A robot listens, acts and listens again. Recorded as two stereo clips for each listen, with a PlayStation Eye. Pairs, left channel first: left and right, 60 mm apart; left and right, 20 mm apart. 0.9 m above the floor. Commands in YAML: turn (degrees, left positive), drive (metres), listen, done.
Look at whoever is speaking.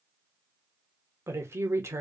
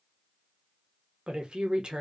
turn: -50
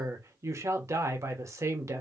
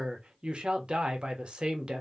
turn: -70
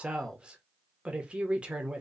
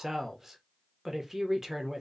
turn: -20
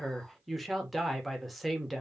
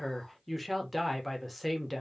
done: "Facing the woman speaking."